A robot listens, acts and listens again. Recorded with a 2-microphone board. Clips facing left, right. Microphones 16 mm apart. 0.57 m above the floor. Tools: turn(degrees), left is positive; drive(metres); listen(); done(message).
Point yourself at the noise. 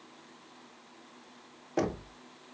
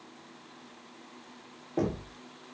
turn(degrees=45)
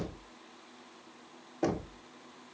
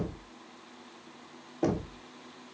turn(degrees=10)
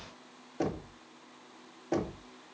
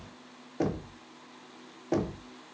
done("Found it: knocking, straight ahead, under 1 m away.")